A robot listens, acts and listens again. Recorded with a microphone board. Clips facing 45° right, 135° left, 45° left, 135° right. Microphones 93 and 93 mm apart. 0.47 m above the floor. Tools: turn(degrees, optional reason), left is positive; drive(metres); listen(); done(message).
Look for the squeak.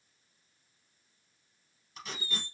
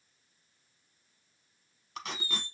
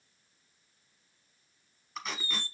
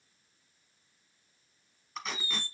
done("Facing the squeak, under 1 m away.")